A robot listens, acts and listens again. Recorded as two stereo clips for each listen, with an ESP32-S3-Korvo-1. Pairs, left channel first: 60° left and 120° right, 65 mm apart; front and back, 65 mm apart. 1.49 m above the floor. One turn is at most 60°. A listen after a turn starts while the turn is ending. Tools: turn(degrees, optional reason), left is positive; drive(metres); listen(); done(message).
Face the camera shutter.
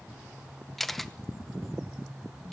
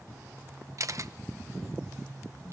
turn(degrees=60, reason="The camera shutter: 145° left.")
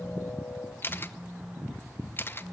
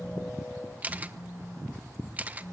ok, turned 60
turn(degrees=60, reason="The camera shutter is now 115° left.")
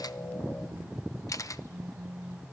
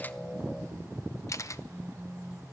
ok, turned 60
turn(degrees=30, reason="The camera shutter is now 30° left.")
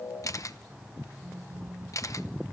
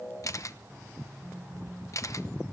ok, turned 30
turn(degrees=30, reason="The camera shutter is now 30° left.")
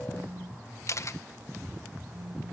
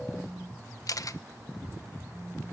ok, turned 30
turn(degrees=20, reason="The camera shutter is now 20° left.")
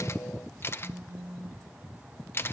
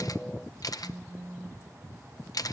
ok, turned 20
turn(degrees=10, reason="The camera shutter is now 10° left.")
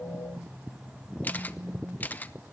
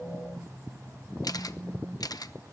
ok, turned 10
done("Found it: a camera shutter, straight ahead.")